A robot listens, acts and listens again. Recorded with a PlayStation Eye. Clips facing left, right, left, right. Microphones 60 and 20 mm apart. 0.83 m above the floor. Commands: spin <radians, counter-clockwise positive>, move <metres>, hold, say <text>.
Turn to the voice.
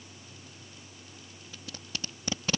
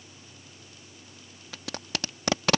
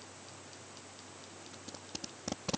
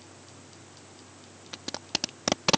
hold
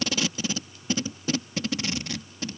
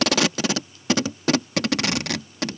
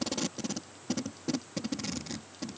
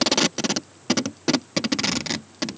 hold
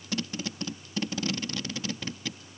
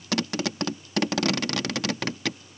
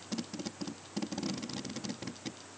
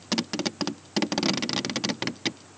say I can't make out anyone speaking, only tape being pulled.